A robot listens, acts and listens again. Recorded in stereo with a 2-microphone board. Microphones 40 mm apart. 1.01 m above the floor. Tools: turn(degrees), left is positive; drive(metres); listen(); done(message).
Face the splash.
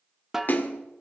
turn(degrees=50)
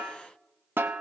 listen()
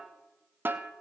done("I heard a splash, but can't make it out now. It was about straight ahead or 80° left.")